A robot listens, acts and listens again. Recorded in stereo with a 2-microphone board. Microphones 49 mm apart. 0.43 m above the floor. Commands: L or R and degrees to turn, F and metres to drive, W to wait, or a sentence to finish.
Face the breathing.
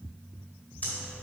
L35
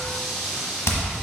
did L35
Found it: breathing, straight ahead, 1 to 2 m away.